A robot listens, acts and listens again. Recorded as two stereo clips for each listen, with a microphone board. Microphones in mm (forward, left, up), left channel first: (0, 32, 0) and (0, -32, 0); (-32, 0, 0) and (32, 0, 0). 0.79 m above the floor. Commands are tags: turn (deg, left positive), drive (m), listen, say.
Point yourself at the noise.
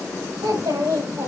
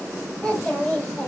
<turn deg="-100"/>
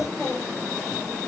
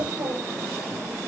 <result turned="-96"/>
<listen/>
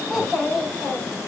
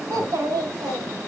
<say>Facing the child speaking.</say>